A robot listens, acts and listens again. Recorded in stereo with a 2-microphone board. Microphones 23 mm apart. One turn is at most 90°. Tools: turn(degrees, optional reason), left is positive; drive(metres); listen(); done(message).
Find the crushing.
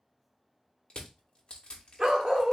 turn(degrees=55, reason="The crushing: about 55° left or 125° left.")
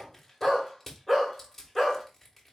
turn(degrees=15, reason="So it is at 15° left.")
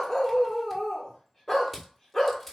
done("Facing the crushing, 1 to 2 m away.")